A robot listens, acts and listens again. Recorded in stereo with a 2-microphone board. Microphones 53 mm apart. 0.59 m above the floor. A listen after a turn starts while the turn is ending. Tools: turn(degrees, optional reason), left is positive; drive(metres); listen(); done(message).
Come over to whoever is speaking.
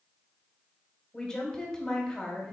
turn(degrees=30)
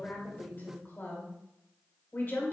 turn(degrees=140, reason="So it is at 140° left.")
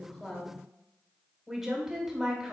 drive(metres=1.0)
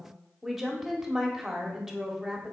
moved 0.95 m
drive(metres=1.0)
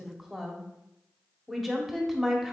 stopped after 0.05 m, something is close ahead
done("I am next to the woman speaking.")